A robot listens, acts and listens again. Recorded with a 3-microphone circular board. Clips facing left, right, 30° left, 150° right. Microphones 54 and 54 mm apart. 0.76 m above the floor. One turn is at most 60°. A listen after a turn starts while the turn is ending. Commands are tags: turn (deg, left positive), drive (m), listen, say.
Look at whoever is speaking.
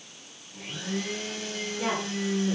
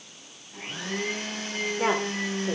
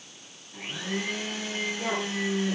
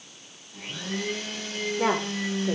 <turn deg="-60"/>
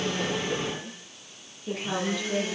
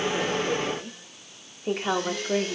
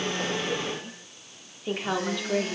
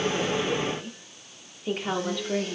<turn deg="-50"/>
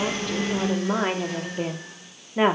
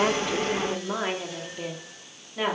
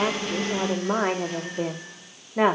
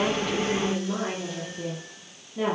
<turn deg="30"/>
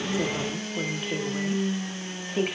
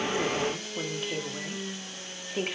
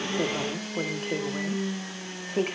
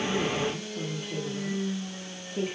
<say>Facing the woman speaking.</say>